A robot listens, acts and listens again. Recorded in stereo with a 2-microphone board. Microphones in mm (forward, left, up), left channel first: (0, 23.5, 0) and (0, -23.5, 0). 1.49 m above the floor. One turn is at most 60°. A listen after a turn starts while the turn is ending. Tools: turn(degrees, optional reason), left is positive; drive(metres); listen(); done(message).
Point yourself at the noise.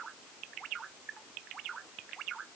listen()
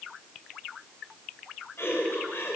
turn(degrees=55, reason="The laughter: about 55° left or 125° left.")
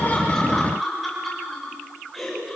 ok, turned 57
done("Found it: laughter, straight ahead.")